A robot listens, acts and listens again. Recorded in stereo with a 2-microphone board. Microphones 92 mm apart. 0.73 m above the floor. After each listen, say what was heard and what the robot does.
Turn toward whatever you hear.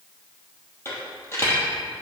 The dropped coin: about 30° left or 150° left. Turn 30° left.
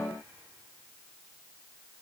Keep listening.
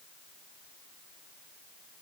I heard a dropped coin, but can't make it out now. It was about straight ahead or 120° left.